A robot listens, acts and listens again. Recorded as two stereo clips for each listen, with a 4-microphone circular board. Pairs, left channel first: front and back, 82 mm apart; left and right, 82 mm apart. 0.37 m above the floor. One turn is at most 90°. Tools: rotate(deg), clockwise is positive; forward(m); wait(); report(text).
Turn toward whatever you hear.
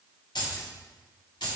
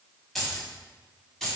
report("Found it: keys jangling, straight ahead.")